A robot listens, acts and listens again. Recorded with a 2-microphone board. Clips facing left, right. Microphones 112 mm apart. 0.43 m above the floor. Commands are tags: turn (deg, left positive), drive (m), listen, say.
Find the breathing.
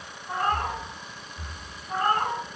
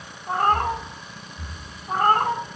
<turn deg="40"/>
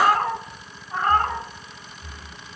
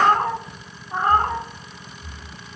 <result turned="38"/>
<turn deg="95"/>
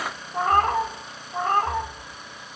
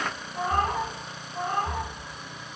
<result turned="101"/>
<say>Found it: breathing, straight ahead, 1 to 2 m away.</say>